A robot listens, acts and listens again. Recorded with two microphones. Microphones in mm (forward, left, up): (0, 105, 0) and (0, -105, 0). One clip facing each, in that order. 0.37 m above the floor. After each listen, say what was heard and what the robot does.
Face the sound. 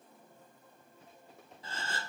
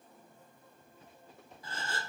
The gasp: about 25° left or 155° left. Turn 25° left.
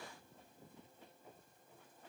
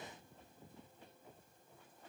Keep listening.
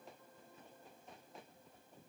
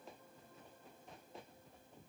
I heard a gasp, but can't make it out now. It was about straight ahead or 130° left.